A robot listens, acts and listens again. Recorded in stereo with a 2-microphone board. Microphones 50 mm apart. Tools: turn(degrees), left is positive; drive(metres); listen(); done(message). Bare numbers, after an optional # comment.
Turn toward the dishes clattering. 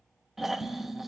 # The dishes clattering: about 70° left or 110° left.
turn(70)
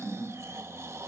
listen()
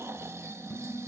# So it is at 40° left.
turn(40)
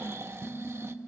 done("Facing the dishes clattering.")